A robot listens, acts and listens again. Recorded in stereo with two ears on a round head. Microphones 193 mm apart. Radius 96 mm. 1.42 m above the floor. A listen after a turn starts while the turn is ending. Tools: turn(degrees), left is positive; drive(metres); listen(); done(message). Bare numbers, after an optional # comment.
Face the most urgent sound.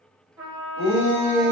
# The shout: about 30° left or 150° left.
turn(30)
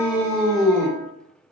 done("Facing the shout, 1 to 2 m away.")